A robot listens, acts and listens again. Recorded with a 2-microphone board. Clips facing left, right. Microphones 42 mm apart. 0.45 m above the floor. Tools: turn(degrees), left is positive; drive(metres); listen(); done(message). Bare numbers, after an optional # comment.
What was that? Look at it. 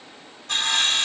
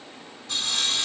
# The sawing: about 60° left or 120° left.
turn(60)
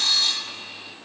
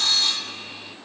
done("Found it: sawing, straight ahead, 1 to 2 m away.")